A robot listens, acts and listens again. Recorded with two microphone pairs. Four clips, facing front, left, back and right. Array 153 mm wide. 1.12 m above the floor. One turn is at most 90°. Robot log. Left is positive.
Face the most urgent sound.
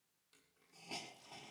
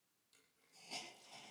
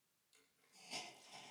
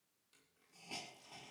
cmd idle
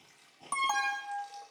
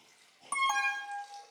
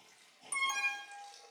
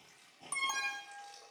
note: The alarm: 30° left.
cmd yaw +30
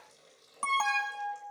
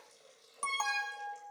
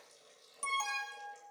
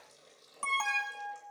end: Facing the alarm, under 1 m away.